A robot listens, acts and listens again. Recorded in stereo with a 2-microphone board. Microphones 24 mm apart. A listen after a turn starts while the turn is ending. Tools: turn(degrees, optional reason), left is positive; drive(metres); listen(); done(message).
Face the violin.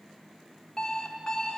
listen()
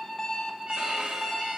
turn(degrees=-50, reason="The violin: about 50° right or 130° right.")
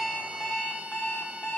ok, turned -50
listen()
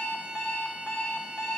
listen()
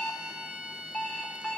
turn(degrees=-80, reason="So it is at 80° right.")
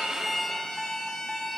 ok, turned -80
turn(degrees=20, reason="The violin is now 20° left.")
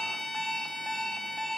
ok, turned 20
done("Found it: a violin, straight ahead.")